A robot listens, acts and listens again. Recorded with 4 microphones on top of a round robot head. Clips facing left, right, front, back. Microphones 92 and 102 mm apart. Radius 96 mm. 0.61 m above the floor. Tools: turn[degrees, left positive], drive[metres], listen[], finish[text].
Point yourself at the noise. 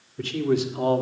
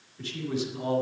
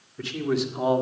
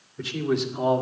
Thought: The man speaking: 85° left.
Action: turn[85]
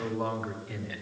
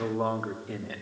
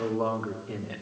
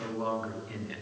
Thought: The man speaking is now 50° right.
Action: turn[-50]
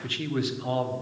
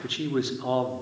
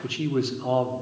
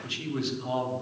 Thought: The man speaking is now 40° right.
Action: turn[-40]
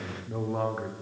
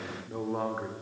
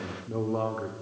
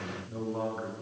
Action: finish[Found it: a man speaking, straight ahead, 2 to 4 m away.]